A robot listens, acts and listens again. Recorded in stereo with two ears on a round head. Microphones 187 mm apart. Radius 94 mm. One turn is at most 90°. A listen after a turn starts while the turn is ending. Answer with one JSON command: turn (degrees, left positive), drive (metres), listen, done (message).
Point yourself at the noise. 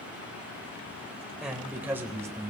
{"turn": -20}
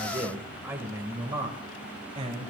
{"turn": -30}
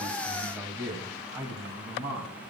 {"turn": -20}
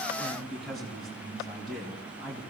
{"done": "Facing the man speaking."}